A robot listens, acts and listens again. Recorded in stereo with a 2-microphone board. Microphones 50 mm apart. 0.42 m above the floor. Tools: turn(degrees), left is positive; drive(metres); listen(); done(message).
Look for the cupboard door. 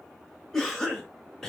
listen()
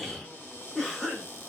turn(degrees=30)
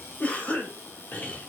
turn(degrees=115)
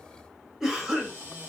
turn(degrees=-40)
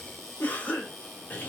done("Found it: a cupboard door, straight ahead, 1 to 2 m away.")